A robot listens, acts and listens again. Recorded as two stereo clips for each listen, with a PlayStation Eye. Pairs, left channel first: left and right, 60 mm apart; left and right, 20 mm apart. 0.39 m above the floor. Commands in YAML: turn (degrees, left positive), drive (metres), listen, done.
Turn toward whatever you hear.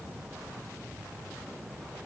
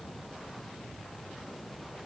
listen: true
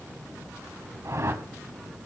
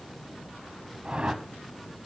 turn: -55
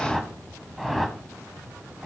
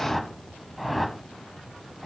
done: "Facing the whoosh."